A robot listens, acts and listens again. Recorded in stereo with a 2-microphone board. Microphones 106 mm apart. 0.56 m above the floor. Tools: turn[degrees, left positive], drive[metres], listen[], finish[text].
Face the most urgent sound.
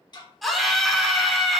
Action: turn[30]
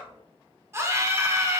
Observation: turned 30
Thought: So it is at 30° right.
Action: turn[-30]
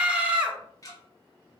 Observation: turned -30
Thought: The scream is now 15° right.
Action: turn[-15]
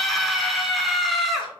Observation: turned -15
Action: finish[Found it: a scream, straight ahead.]